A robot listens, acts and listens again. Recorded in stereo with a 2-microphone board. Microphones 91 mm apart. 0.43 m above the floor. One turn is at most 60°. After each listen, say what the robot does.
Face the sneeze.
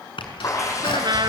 Turn 60° left.
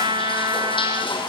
Keep listening.
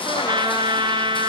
I heard a sneeze, but can't make it out now. It was about 15° left or 45° left.